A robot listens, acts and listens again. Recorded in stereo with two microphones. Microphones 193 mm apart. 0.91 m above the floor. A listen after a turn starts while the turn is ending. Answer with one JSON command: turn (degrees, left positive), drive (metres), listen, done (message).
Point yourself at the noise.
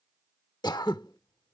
{"turn": 20}
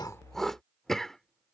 {"done": "Facing the throat clearing."}